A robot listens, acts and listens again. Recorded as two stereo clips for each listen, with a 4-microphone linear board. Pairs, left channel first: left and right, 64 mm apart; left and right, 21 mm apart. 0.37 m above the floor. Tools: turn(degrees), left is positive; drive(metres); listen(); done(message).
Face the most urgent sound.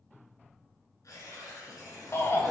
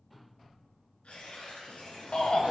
turn(degrees=45)
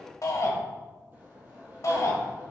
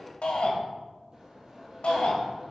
turn(degrees=80)
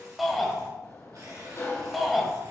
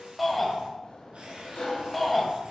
done("Facing the shout, 1 to 2 m away.")